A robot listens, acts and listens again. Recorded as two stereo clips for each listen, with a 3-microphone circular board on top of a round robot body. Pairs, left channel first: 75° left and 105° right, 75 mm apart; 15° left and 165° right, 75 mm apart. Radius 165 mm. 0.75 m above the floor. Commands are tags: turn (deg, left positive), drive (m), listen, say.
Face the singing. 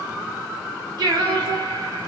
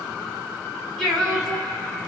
<turn deg="-75"/>
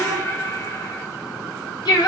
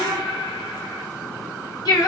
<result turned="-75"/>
<turn deg="55"/>
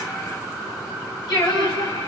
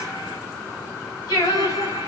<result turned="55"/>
<turn deg="55"/>
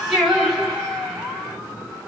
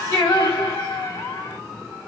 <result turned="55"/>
<turn deg="-15"/>
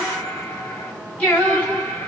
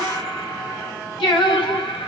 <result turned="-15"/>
<say>Facing the singing.</say>